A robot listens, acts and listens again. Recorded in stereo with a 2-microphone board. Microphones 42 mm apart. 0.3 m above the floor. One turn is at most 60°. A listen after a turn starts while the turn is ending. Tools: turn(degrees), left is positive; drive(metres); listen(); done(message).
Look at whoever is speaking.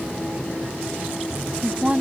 turn(degrees=-20)
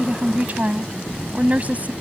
turn(degrees=-60)
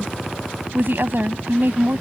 turn(degrees=-60)
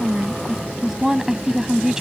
turn(degrees=-20)
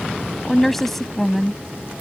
done("Facing the woman speaking.")